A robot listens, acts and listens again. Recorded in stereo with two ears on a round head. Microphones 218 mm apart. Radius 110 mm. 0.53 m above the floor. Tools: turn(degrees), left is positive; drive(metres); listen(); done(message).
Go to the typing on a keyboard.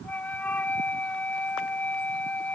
listen()
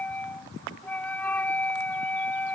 listen()
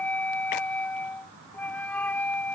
done("I can't make out typing on a keyboard to turn to.")